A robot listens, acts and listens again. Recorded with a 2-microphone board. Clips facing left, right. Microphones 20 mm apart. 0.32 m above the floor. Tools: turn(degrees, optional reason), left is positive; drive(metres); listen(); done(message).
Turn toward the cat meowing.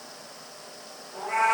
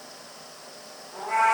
turn(degrees=30)
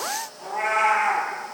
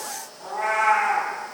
turn(degrees=115, reason="So it is at 115° left.")
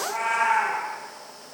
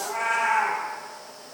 done("Found it: a cat meowing, straight ahead.")